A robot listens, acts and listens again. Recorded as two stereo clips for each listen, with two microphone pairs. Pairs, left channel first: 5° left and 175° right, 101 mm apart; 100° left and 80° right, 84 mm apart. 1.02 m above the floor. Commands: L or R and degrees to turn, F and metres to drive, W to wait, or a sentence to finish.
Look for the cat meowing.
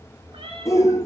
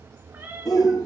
R145
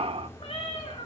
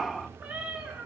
Found it: a cat meowing, straight ahead, over 4 m away.